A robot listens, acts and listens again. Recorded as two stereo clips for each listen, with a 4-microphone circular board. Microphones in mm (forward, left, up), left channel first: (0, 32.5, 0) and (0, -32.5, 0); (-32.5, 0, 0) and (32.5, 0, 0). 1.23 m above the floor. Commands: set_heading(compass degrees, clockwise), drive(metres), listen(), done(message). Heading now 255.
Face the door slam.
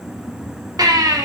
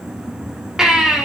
listen()
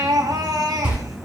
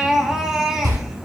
set_heading(270)
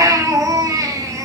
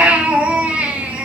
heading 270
done("I heard a door slam from this way, but can't make it out now.")